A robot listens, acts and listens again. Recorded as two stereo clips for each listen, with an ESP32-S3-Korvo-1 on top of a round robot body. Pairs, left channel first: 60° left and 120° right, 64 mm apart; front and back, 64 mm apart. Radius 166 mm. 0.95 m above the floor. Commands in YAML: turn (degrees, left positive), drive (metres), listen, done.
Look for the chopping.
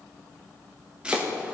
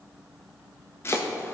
turn: -45
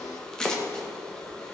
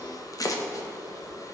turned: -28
turn: -20
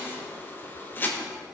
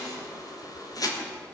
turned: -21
done: "Found it: chopping, straight ahead, 1 to 2 m away."